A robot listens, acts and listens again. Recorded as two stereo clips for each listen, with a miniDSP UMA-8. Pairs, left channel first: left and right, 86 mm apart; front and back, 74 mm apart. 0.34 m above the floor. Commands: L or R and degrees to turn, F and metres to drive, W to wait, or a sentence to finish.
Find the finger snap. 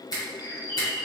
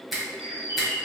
L90
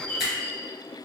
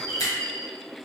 W
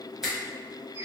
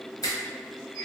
R10
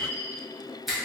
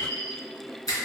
Facing the finger snap.